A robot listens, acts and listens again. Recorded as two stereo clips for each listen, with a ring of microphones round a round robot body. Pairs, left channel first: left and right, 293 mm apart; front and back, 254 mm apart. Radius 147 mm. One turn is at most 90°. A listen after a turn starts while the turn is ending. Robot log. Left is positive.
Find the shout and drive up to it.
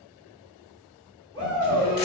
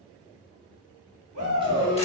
note: The shout: 165° left.
cmd yaw +90
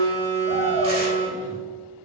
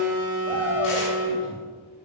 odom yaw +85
note: Nothing new. It was at 80° left.
cmd yaw +80
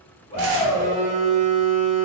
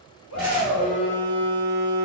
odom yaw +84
cmd fwd 1.0
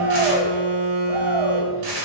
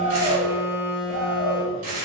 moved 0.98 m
cmd fwd 1.0
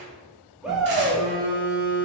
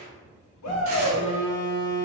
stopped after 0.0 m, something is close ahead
end: I am next to the shout.